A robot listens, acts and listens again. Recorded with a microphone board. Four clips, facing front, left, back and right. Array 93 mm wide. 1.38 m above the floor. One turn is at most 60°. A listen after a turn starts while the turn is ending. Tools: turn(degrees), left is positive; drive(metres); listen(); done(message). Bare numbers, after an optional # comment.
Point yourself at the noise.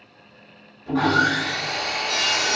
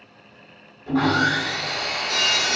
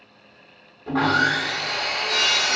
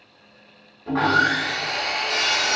# The sawing: 135° right.
turn(-60)
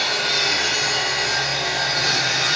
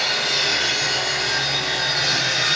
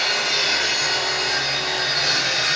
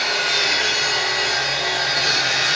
# The sawing is now 80° right.
turn(-60)
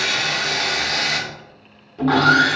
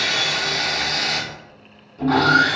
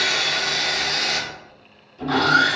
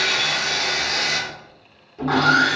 # The sawing is now 10° right.
turn(-10)
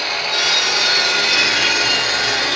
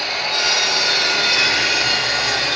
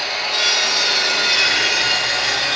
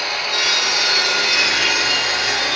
done("Facing the sawing.")